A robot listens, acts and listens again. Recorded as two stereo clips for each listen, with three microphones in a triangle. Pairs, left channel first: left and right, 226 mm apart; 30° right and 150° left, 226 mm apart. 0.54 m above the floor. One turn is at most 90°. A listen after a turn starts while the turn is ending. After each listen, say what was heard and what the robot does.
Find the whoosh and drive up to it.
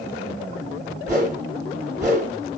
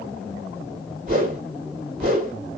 The whoosh: 165° right. Turn 90° right.
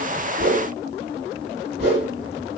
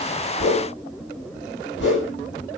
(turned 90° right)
The whoosh is now 55° right. Turn 55° right.
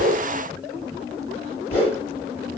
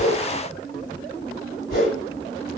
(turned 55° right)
The whoosh is now 10° left. Turn 10° left.
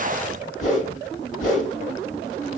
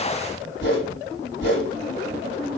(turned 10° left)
Drive 1.0 m forward.
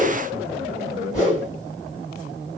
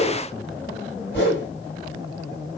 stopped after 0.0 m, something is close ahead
Something is in my way. I am facing the whoosh but have not reached it.